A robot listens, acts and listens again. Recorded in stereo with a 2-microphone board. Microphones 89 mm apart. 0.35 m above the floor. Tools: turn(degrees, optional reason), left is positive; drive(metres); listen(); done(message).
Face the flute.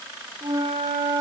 turn(degrees=-60, reason="The flute: about 60° right or 120° right.")
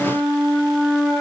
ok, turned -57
done("Facing the flute.")